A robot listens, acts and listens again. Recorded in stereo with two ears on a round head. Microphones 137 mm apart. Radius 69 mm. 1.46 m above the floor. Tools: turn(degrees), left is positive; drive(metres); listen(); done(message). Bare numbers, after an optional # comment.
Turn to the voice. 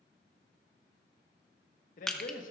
# The man speaking: about 60° left or 120° left.
turn(60)
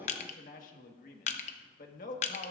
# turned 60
# So it is at 60° left.
turn(60)
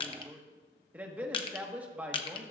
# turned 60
# The man speaking is now 10° right.
turn(-10)
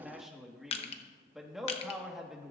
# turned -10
done("Facing the man speaking.")